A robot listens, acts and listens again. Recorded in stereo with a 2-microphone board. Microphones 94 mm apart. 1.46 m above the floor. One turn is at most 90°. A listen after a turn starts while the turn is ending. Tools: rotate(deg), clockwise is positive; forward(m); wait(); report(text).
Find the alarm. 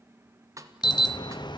rotate(-55)
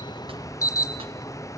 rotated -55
rotate(-45)
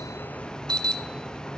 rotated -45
rotate(-10)
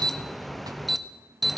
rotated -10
report("Facing the alarm.")